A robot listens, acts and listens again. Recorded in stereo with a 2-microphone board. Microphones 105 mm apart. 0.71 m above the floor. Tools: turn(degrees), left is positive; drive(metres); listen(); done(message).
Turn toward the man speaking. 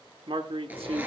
turn(degrees=-65)
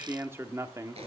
turn(degrees=-30)
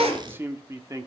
turn(degrees=-30)
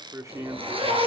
turn(degrees=-35)
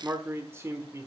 turn(degrees=-30)
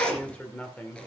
turn(degrees=15)
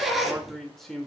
done("Facing the man speaking, 1 to 2 m away.")